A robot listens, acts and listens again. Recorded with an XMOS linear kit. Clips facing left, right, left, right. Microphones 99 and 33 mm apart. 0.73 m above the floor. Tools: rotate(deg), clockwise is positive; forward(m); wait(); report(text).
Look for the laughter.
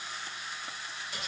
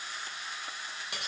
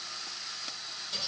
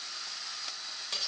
wait()
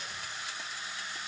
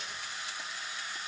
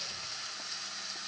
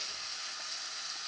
wait()
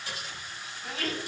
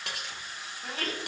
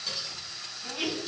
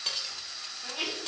rotate(30)
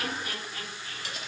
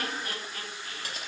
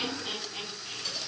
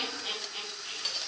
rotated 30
rotate(40)
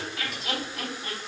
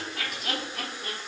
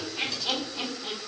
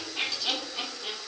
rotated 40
rotate(120)
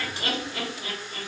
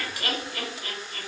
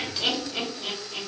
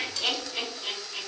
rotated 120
rotate(-40)
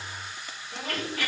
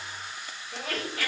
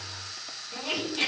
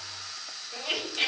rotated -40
report("Facing the laughter.")